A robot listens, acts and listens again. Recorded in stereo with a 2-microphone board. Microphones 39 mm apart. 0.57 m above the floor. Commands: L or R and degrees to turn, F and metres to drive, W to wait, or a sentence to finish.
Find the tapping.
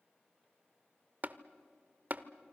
R45
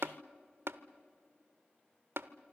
R85
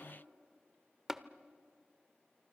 R10
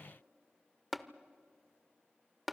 Found it: tapping, straight ahead, under 1 m away.